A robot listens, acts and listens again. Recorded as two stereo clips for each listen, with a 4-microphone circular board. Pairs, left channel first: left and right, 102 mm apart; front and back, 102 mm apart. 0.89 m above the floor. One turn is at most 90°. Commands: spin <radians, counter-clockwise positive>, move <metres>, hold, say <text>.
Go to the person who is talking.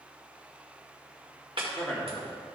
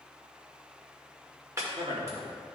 spin 1.57
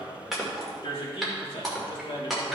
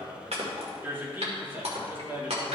spin 1.57
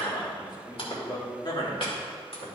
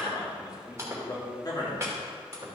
spin 0.87
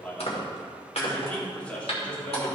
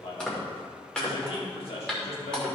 spin 0.26
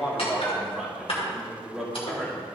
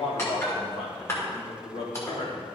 move 1.0
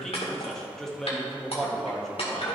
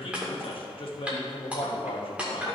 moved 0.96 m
move 1.0
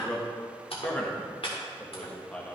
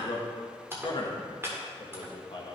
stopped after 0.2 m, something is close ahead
spin 0.26
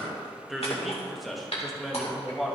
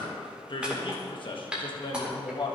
say I am next to the man speaking.